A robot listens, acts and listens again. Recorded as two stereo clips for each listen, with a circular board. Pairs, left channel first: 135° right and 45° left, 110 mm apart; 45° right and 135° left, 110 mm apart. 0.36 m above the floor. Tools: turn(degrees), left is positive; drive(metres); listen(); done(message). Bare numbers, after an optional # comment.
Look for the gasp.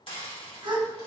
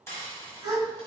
# The gasp: 90° left.
turn(90)
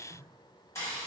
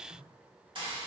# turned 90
done("Facing where the gasp came from. I can't hear it now.")